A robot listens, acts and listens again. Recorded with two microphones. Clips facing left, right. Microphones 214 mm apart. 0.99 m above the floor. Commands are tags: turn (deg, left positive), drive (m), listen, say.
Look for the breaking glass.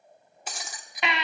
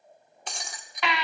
<turn deg="30"/>
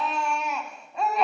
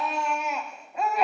<listen/>
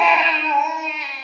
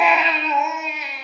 <say>I heard breaking glass, but can't make it out now. It was about 25° right or 145° left.</say>